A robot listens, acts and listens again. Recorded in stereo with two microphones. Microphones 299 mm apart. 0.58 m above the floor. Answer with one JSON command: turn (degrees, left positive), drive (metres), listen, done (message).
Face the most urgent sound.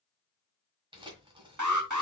{"turn": -75}
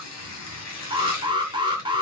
{"turn": -15}
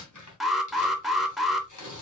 {"done": "Found it: an alarm, straight ahead."}